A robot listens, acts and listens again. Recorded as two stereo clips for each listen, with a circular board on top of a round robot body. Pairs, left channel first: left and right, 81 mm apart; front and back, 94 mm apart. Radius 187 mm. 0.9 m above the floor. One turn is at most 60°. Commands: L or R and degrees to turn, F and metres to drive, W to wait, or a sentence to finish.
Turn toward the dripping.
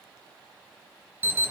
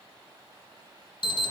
W
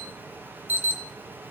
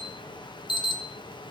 W
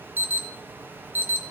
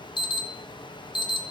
I can't make out dripping, only an alarm.